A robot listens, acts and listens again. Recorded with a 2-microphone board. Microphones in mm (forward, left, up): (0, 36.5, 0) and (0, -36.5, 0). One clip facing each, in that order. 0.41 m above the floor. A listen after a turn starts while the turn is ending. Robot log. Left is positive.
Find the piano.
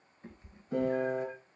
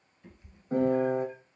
note: The piano: about 45° right or 135° right.
cmd yaw -45
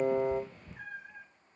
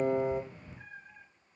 cmd idle
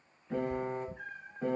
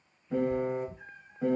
end: Facing the piano.